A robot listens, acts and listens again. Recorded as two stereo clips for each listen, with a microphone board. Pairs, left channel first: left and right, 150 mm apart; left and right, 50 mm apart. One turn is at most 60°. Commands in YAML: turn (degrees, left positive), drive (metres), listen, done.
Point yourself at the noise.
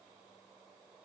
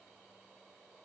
listen: true
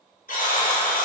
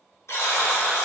turn: 60
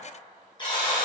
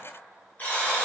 turn: 35
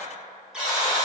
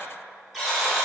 done: "Found it: a buzzer, straight ahead."